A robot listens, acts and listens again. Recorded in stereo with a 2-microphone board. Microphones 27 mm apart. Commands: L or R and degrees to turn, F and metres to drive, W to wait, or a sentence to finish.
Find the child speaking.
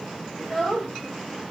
L20
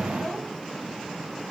W
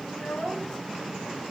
L135
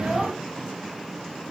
W
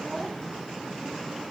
W
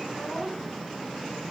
R15
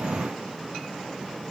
W
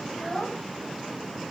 Facing the child speaking, over 4 m away.